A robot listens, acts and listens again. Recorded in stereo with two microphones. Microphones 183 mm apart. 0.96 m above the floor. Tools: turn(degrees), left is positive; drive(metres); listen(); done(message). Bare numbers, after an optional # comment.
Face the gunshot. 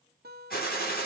# The gunshot: about 55° left or 125° left.
turn(55)
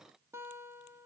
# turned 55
listen()
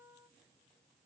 done("I heard a gunshot, but can't make it out now. It was about straight ahead or 70° left.")